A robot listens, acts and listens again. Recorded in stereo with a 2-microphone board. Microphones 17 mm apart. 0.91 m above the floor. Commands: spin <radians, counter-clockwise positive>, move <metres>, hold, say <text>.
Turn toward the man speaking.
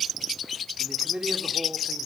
spin -1.57
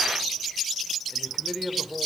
spin -0.26
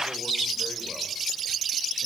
hold
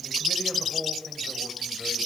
spin -0.26
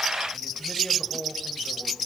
say Found it: a man speaking, straight ahead, over 4 m away.